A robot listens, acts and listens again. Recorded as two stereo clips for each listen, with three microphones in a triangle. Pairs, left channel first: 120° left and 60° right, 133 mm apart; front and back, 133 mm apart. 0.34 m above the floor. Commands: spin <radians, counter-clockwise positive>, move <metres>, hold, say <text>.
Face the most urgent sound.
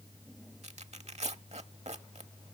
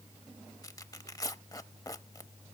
hold
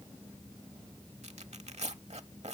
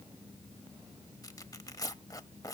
hold
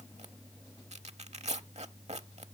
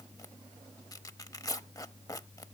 say I can't make out anything urgent to turn to.